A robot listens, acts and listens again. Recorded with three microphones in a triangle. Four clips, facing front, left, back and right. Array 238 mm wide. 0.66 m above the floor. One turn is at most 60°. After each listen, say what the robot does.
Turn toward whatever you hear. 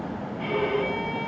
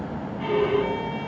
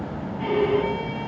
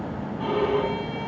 Turn 60° right.
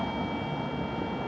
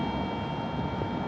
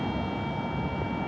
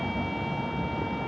Turn 60° right.
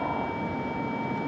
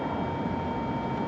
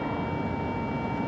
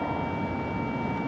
Turn 25° right.
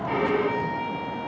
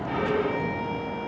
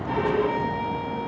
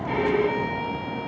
Turn 10° right.
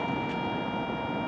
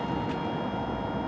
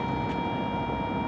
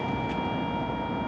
Keep listening.
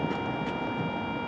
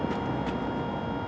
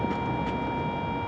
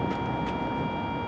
Keep listening.
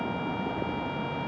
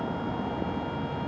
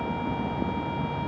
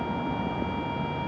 Facing where the violin came from. I can't hear it now.